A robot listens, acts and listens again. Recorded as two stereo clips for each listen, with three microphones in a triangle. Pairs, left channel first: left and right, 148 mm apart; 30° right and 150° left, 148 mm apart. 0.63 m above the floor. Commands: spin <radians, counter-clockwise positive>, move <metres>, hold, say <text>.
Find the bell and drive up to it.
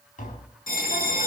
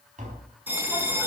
spin 1.31
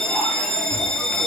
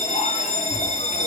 move 1.0
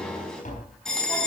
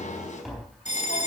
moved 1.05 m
move 1.0
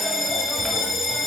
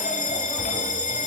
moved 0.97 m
move 1.0
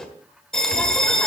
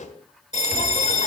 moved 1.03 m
move 1.0
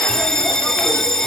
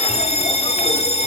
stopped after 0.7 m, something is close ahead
say Arrived at the bell, straight ahead.